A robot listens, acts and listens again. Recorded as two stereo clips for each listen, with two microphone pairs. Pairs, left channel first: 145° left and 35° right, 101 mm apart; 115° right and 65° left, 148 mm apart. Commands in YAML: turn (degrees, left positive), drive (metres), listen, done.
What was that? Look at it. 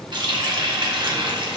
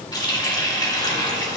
turn: -60
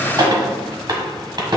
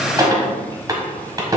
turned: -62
done: "Facing the running tap."